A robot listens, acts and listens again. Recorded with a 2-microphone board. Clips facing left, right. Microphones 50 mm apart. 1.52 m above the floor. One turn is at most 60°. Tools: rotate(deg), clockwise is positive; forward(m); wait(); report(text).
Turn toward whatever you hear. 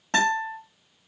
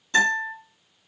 rotate(-60)
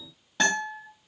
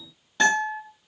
report("Found it: a guitar, straight ahead, 1 to 2 m away.")